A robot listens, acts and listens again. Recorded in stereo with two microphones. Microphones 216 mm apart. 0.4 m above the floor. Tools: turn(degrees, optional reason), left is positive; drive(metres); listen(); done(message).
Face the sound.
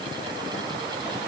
listen()
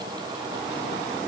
listen()
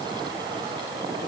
done("I can't make out anything to turn to.")